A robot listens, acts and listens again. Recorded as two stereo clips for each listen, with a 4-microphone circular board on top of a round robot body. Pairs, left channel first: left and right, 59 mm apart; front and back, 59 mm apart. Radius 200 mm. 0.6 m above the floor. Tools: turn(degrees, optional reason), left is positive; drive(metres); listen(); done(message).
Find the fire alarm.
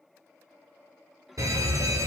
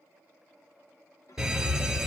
turn(degrees=-100, reason="The fire alarm: 100° right.")
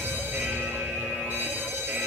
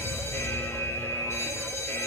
turn(degrees=-35, reason="The fire alarm is now 35° right.")
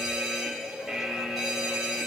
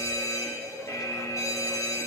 done("Facing the fire alarm, over 4 m away.")